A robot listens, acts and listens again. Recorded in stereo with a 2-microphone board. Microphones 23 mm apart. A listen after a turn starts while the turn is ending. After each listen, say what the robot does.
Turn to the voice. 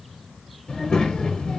Turn 35° left.
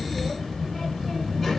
Facing the child speaking, 1 to 2 m away.